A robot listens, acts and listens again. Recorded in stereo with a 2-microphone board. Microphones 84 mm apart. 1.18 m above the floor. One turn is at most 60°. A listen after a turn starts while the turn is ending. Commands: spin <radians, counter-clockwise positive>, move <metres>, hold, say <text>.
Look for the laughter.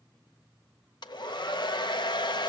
hold
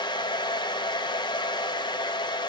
hold
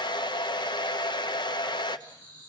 spin -0.52
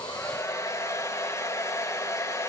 hold
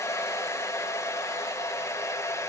hold
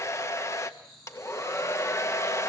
say Facing the laughter.